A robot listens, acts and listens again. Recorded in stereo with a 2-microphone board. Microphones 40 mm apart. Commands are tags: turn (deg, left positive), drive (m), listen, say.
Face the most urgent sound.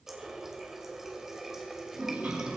<listen/>
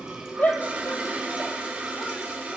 <turn deg="45"/>
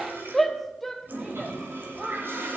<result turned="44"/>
<say>Found it: a shout, straight ahead.</say>